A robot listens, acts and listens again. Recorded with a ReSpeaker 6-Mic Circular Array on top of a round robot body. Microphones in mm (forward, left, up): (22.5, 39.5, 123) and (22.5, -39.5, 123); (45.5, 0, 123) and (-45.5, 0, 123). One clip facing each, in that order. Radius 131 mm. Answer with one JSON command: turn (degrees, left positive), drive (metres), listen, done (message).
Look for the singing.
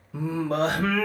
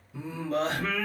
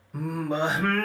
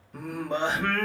{"turn": 85}
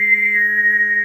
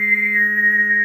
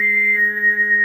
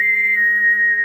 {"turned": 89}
{"done": "Facing the singing, 1 to 2 m away."}